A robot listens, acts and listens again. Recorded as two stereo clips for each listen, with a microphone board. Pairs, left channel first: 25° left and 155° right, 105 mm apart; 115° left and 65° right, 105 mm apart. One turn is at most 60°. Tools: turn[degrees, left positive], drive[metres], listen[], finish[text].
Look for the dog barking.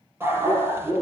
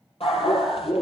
Thought: The dog barking: 135° left.
Action: turn[60]
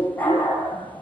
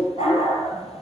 Thought: The dog barking is now 95° left.
Action: turn[60]
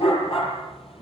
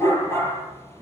Thought: The dog barking is now 45° left.
Action: turn[45]
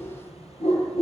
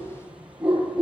Thought: The dog barking is now 10° left.
Action: turn[10]
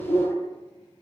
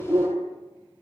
Action: finish[Found it: a dog barking, straight ahead.]